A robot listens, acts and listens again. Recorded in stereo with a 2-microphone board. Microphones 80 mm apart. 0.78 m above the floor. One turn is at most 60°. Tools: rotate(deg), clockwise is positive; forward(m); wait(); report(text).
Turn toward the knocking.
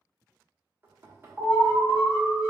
rotate(30)
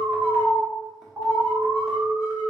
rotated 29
wait()
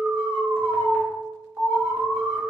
wait()
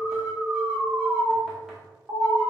report("I heard knocking, but can't make it out now. It was about straight ahead or 120° right.")